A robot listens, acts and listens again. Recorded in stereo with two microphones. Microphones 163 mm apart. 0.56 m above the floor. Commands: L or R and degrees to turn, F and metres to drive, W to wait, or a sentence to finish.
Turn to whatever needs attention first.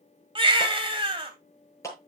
R30
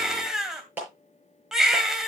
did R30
Facing the baby crying, 2 to 4 m away.